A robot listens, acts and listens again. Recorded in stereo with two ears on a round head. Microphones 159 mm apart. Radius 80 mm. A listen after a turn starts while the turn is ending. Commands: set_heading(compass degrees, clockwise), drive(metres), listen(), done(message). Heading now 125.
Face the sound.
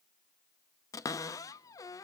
set_heading(105)
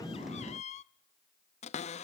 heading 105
set_heading(325)
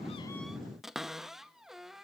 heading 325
done("Found it: a cupboard door, straight ahead, under 1 m away.")